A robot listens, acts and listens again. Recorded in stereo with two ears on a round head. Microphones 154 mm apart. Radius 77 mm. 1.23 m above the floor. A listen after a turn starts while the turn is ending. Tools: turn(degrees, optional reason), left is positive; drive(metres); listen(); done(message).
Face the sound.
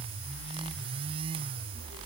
listen()
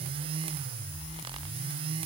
listen()
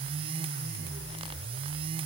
done("I can't make out anything.")